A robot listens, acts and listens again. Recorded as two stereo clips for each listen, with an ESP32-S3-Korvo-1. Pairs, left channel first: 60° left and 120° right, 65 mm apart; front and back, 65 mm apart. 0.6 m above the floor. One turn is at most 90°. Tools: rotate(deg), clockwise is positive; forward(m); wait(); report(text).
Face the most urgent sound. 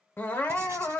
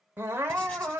rotate(-90)
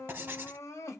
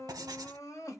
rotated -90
rotate(-25)
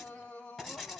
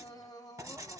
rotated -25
rotate(10)
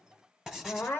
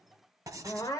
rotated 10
report("Facing the crying.")